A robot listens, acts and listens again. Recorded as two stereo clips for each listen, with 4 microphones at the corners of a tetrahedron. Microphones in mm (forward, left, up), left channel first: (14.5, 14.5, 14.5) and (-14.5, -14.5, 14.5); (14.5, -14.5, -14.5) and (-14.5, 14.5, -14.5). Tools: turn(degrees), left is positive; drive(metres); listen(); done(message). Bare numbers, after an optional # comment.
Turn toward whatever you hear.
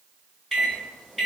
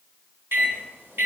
# The microwave: 140° left.
turn(140)
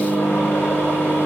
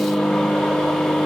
# The microwave is now 40° left.
turn(40)
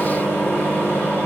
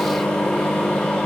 # The microwave is now 15° left.
turn(15)
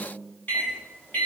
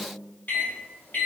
done("Facing the microwave, 1 to 2 m away.")